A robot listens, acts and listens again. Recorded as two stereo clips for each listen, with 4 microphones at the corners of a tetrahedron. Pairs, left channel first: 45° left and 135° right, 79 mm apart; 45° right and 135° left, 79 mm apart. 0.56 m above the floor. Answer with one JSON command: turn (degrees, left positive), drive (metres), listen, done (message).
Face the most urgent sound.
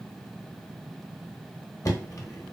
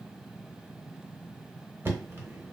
{"listen": true}
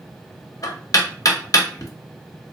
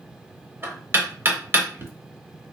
{"listen": true}
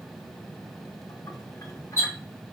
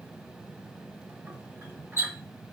{"done": "I can't make out anything urgent, only knocking."}